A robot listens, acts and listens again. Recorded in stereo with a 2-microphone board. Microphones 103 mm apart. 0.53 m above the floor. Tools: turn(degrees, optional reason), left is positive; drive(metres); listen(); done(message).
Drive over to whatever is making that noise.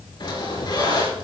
turn(degrees=45, reason="The squeak: about 45° left or 135° left.")
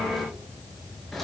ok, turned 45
drive(metres=1.0)
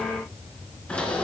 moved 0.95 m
turn(degrees=10, reason="The squeak is now 10° left.")
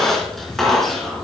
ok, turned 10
drive(metres=1.0)
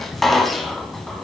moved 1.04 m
drive(metres=1.0)
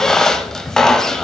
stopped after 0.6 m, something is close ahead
done("I am next to the squeak.")